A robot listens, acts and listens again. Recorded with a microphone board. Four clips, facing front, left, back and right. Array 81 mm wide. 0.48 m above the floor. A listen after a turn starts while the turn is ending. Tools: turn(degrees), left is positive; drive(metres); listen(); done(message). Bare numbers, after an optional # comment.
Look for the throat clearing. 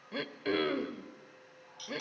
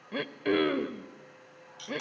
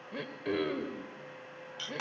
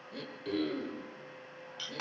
# The throat clearing: 75° left.
turn(75)
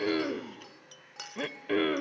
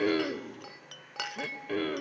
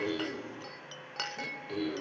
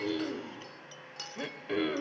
done("Facing the throat clearing, 1 to 2 m away.")